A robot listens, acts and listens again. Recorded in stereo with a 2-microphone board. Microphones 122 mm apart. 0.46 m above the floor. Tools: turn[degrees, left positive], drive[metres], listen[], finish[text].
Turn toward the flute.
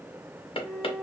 Action: turn[30]
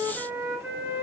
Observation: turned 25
Thought: So it is at 20° right.
Action: turn[-20]
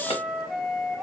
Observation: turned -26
Action: finish[Facing the flute, under 1 m away.]